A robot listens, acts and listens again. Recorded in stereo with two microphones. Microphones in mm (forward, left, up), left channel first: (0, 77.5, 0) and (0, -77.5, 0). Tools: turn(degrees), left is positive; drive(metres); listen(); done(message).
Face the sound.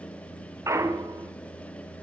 turn(degrees=-20)
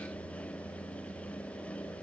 listen()
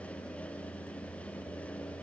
done("I heard a clunk, but can't make it out now. It was about straight ahead or 140° right.")